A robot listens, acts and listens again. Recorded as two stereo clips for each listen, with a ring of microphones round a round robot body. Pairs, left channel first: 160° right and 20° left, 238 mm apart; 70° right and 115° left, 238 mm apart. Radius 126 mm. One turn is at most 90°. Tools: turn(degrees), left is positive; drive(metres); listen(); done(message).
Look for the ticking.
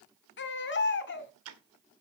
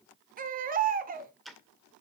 turn(degrees=20)
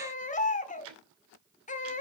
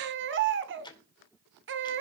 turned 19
done("Found it: ticking, straight ahead, 2 to 4 m away.")